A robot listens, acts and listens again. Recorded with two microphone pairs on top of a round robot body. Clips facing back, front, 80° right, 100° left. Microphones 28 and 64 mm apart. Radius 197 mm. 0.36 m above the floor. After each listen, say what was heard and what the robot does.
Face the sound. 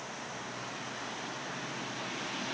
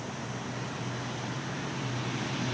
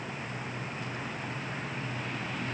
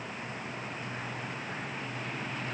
Keep listening.
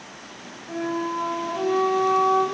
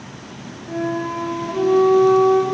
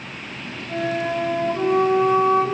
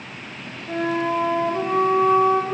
The flute: 80° left. Turn 80° left.
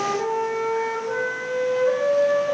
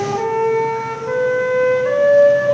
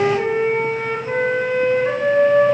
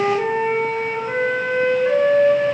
Found it: a flute, straight ahead.